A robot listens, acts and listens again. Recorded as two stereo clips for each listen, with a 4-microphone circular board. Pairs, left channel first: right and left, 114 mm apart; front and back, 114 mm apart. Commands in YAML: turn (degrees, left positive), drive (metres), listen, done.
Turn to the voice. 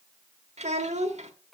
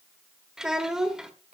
turn: 95
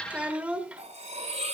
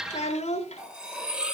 turn: 10
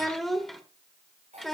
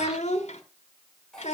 done: "Facing the child speaking, 1 to 2 m away."